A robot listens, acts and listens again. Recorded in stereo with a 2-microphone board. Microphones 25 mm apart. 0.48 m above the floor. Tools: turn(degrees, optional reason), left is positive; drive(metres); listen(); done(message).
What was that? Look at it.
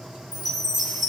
turn(degrees=30)
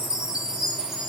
turn(degrees=-30, reason="So it is at 30° right.")
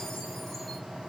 listen()
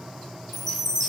done("Facing the chime.")